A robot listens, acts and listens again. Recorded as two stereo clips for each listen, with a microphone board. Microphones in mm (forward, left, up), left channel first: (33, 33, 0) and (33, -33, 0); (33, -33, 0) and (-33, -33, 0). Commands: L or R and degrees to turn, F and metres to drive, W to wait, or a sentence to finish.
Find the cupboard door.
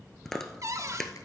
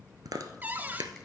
R120
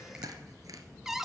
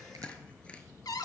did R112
Facing the cupboard door, under 1 m away.